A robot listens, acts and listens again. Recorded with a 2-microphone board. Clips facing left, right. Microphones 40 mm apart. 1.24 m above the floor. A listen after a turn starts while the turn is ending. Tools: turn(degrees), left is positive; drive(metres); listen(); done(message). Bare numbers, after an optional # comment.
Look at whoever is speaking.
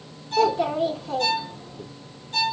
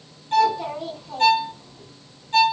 # The child speaking: about 60° left or 120° left.
turn(60)
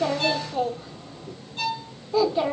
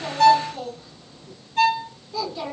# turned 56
# So it is at 35° left.
turn(35)
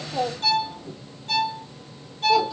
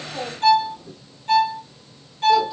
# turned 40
listen()
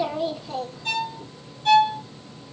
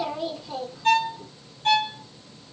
done("Facing the child speaking.")